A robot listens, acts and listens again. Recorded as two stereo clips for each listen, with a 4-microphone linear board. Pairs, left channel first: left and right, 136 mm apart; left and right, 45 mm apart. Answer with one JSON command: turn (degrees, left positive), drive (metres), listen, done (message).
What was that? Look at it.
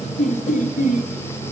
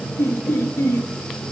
{"turn": 90}
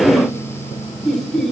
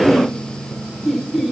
{"done": "Facing the laughter, 2 to 4 m away."}